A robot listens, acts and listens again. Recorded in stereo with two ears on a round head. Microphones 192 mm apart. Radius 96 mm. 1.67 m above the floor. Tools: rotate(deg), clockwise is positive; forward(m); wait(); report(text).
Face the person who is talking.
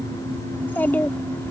rotate(-30)
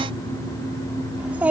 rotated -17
report("Found it: a child speaking, straight ahead.")